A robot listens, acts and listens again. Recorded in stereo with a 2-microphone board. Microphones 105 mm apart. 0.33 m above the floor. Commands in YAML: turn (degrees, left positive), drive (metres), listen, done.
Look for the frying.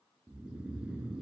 listen: true
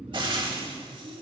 turn: -50
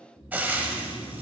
turn: -20
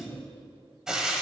done: "Found it: frying, straight ahead, under 1 m away."